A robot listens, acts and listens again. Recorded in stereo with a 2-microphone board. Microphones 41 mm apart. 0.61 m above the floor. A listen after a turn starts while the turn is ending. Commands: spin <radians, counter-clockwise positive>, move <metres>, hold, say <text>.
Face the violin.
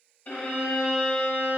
spin 0.87
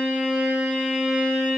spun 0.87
say Found it: a violin, straight ahead.